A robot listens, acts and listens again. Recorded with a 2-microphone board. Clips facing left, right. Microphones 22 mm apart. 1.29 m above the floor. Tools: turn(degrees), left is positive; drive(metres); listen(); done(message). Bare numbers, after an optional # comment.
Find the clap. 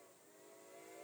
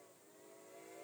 listen()
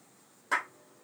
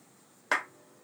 # The clap: about 60° right or 120° right.
turn(-60)
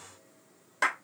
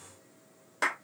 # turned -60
done("Found it: a clap, straight ahead.")